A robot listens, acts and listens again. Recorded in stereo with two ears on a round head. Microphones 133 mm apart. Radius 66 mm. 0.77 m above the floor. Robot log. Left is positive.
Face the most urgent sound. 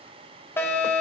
note: The fire alarm: about 15° left or 165° left.
cmd yaw +15
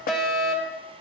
end: Found it: a fire alarm, straight ahead.